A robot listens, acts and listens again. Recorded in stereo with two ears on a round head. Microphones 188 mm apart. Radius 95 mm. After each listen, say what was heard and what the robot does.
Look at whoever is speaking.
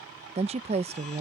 The woman speaking: about 30° right or 150° right. Turn 30° right.
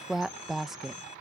Found it: a woman speaking, straight ahead.